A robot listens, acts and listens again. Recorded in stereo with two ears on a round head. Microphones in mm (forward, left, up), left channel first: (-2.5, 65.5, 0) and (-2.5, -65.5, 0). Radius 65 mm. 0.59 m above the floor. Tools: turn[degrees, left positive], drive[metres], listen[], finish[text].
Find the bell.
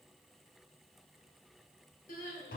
Action: listen[]
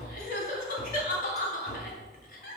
Action: listen[]
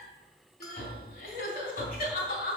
Action: finish[I can't make out a bell, only crying and tapping.]